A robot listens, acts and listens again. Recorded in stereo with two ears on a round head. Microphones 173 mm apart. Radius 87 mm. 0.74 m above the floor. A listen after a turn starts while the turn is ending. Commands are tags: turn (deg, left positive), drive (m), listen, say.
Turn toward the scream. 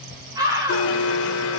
<turn deg="-20"/>
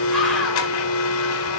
<listen/>
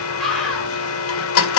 <say>Facing the scream.</say>